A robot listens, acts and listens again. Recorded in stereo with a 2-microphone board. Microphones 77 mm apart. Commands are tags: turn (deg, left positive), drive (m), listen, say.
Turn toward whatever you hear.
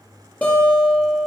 <turn deg="20"/>
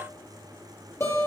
<turn deg="135"/>
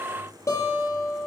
<turn deg="40"/>
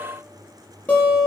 <turn deg="20"/>
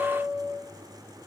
<say>Found it: a guitar, straight ahead, over 4 m away.</say>